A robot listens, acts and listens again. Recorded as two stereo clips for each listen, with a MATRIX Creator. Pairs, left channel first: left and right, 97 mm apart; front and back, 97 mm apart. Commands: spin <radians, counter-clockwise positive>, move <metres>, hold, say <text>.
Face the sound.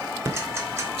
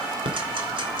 spin -2.62
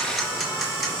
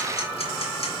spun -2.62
hold
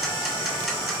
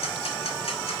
hold
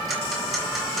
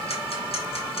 say Facing where the ticking came from. I can't hear it now.